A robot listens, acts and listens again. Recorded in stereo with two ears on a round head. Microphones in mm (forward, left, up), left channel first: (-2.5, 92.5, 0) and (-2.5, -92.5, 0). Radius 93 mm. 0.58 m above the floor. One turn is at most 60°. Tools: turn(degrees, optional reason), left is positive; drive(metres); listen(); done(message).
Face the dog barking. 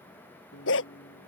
turn(degrees=60, reason="The dog barking: about 70° left or 110° left.")
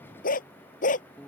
turn(degrees=40, reason="So it is at 40° left.")
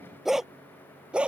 done("Facing the dog barking.")